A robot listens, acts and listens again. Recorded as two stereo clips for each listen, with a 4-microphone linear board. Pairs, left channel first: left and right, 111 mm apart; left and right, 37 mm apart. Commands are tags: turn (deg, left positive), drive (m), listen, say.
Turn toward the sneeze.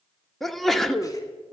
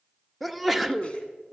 <turn deg="30"/>
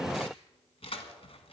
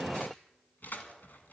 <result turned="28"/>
<listen/>
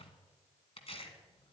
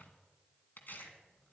<say>I heard a sneeze, but can't make it out now. It was about 25° right or 150° left.</say>